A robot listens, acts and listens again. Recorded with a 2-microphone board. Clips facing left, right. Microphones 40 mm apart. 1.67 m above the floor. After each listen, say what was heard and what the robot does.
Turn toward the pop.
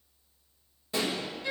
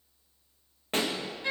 The pop: about 50° right or 130° right. Turn 50° right.
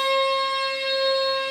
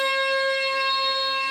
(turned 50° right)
Keep listening.
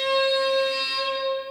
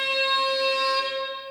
I heard a pop, but can't make it out now. It was about straight ahead or 80° right.